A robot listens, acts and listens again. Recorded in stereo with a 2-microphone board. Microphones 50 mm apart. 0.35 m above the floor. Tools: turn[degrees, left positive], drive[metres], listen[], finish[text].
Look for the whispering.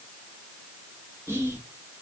Thought: The whispering: about 60° right or 120° right.
Action: turn[-60]
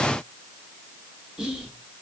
Thought: So it is at 15° right.
Action: turn[-15]
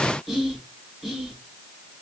Action: finish[Facing the whispering.]